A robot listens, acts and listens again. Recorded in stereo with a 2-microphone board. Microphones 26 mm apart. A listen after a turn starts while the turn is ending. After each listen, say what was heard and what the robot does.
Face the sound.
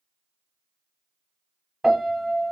The piano: about 15° right or 165° right. Turn 15° right.
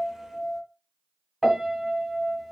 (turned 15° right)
Found it: a piano, straight ahead.